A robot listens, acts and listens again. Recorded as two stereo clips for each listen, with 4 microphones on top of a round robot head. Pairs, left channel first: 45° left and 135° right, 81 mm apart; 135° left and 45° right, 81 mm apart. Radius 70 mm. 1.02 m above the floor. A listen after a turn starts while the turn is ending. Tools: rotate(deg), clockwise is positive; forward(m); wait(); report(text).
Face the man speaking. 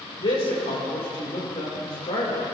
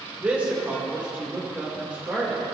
rotate(-30)
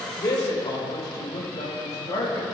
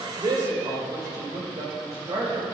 report("Facing the man speaking, over 4 m away.")